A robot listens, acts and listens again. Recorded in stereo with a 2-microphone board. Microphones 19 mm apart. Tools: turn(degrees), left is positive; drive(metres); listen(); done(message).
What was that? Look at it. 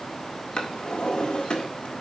turn(degrees=50)
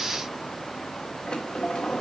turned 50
turn(degrees=75)
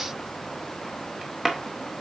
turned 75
done("Found it: a drawer, straight ahead.")